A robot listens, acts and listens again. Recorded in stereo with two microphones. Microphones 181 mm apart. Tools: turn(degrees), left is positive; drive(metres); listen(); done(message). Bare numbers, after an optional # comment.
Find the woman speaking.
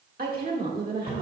# The woman speaking: about 55° right or 125° right.
turn(-55)
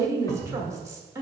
# So it is at 20° right.
turn(-20)
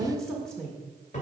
done("Found it: a woman speaking, straight ahead.")